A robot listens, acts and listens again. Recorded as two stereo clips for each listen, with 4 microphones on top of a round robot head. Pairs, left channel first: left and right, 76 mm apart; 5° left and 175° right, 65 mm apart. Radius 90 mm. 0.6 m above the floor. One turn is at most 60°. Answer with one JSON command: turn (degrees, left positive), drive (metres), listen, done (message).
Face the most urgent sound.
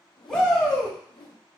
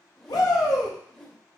{"turn": 10}
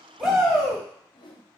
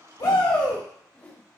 {"done": "Facing the shout."}